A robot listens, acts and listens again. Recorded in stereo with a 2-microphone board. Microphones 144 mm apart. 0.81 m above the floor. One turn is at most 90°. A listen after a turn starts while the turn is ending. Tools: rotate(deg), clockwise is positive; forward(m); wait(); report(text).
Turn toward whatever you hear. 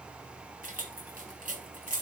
rotate(70)
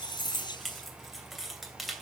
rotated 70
report("Facing the keys jangling.")